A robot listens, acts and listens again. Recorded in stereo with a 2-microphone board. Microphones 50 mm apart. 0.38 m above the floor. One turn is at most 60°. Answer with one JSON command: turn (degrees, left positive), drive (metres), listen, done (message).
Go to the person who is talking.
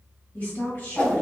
{"turn": 50}
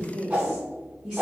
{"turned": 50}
{"turn": 10}
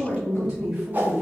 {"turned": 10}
{"drive": 1.0}
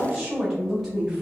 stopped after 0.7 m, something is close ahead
{"done": "I am next to the woman speaking."}